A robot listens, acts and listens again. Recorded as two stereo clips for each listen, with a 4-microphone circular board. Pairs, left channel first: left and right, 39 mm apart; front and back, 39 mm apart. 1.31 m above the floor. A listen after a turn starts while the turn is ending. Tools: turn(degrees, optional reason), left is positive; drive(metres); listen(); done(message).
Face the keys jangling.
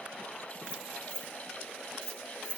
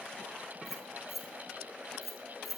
turn(degrees=-85, reason="The keys jangling: 85° right.")
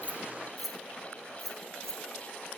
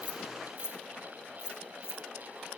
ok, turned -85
turn(degrees=10, reason="The keys jangling is now 10° left.")
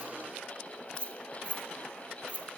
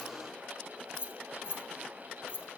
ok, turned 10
turn(degrees=35, reason="The keys jangling is now 35° left.")
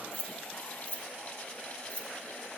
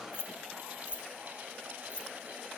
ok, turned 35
turn(degrees=35, reason="The keys jangling is now 35° left.")
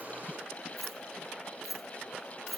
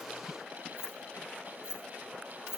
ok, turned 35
done("Found it: keys jangling, straight ahead, 1 to 2 m away.")